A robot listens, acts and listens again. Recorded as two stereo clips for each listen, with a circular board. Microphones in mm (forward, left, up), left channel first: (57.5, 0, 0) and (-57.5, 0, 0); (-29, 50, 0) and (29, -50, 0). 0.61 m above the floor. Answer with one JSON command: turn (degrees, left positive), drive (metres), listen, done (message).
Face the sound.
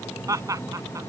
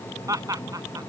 {"turn": -120}
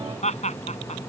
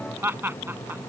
{"turn": 10}
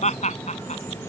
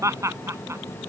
{"done": "Found it: laughter, straight ahead."}